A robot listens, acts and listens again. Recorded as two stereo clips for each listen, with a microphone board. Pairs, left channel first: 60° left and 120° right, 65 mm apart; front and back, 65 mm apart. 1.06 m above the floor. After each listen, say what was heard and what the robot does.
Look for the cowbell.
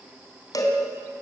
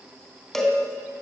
The cowbell: 85° left. Turn 85° left.
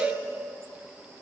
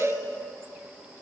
Found it: a cowbell, straight ahead.